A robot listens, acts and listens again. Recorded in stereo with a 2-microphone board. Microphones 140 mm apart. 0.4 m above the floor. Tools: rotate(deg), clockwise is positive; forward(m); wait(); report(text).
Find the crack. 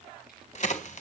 rotate(-60)
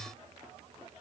wait()
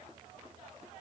report("I heard a crack, but can't make it out now. It was about straight ahead or 60° left.")